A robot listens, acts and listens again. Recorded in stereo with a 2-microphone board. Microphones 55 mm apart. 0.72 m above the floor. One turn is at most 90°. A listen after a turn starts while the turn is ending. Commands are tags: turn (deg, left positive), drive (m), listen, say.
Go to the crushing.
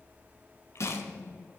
<turn deg="65"/>
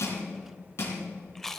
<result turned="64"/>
<turn deg="55"/>
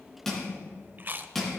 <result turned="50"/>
<drive m="1.0"/>
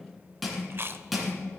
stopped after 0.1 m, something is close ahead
<say>Blocked. The crushing is further on, straight ahead.</say>